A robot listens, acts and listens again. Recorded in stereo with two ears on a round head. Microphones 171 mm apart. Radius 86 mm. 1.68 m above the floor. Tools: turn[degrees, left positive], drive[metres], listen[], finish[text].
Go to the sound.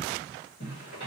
Thought: The zipper: about 45° left or 135° left.
Action: turn[45]
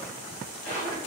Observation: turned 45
Thought: So it is at 90° left.
Action: turn[90]
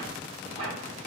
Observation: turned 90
Thought: The zipper is now 20° left.
Action: turn[20]
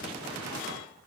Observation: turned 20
Action: listen[]
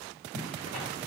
Action: drive[1.0]
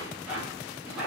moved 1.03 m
Action: drive[1.0]
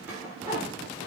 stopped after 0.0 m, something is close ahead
Thought: The zipper is now 10° right.
Action: turn[-10]
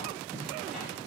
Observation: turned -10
Action: finish[Arrived at the zipper, straight ahead.]